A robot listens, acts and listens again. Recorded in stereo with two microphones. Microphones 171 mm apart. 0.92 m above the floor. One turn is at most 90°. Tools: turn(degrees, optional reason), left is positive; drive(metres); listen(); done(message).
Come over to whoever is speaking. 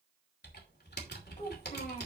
turn(degrees=50, reason="The child speaking: about 50° left or 130° left.")
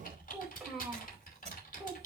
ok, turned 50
drive(metres=1.0)
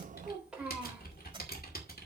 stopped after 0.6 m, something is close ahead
done("Something is in my way. I am facing the child speaking but have not reached it.")